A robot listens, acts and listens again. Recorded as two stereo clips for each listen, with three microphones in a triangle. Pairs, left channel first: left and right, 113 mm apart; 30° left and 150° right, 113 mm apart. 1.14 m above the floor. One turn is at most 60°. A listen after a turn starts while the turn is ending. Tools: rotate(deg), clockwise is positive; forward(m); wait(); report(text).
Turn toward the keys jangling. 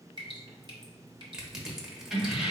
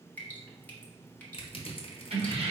rotate(-60)
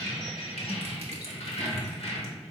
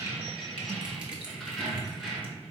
rotate(-60)
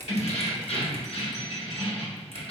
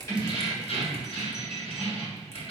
rotate(-60)
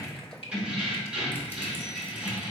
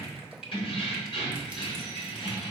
rotate(10)
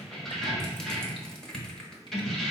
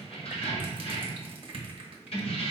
report("Facing the keys jangling.")